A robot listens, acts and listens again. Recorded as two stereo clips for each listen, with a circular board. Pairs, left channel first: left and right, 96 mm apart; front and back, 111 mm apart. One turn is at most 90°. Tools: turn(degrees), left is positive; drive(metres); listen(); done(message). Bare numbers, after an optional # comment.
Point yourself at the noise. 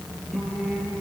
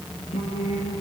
done("Facing the singing, over 4 m away.")